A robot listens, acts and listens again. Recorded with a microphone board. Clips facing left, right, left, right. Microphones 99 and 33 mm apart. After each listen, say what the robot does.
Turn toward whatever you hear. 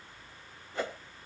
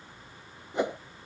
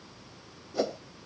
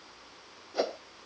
Turn 20° right.
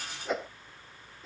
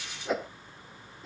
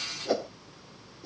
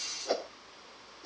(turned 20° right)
Found it: a whoosh, straight ahead.